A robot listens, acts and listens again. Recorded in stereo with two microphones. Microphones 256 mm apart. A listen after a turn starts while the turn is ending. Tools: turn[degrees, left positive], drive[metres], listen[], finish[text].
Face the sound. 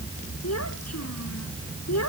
Action: turn[90]
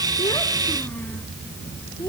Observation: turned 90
Thought: So it is at 10° left.
Action: turn[10]
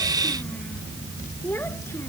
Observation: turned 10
Thought: The child speaking is now 10° left.
Action: turn[10]
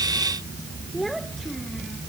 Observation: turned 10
Action: finish[Facing the child speaking.]